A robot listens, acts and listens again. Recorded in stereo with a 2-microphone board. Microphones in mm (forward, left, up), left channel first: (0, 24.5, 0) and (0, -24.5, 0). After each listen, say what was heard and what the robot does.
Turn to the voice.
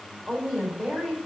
Turn 30° right.
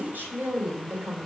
So it is at 135° right. Turn 135° right.
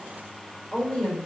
The woman speaking is now 20° left. Turn 20° left.
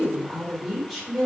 Found it: a woman speaking, straight ahead.